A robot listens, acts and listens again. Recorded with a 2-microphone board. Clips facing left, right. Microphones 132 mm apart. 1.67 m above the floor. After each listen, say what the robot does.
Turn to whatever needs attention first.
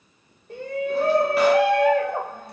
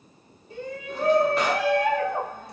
Turn 65° left.
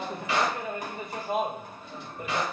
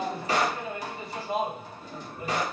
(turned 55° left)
Turn 55° left.
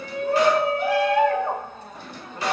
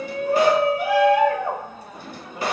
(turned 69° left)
Turn 10° right.
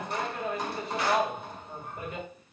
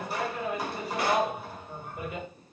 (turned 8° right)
Facing the shout, 1 to 2 m away.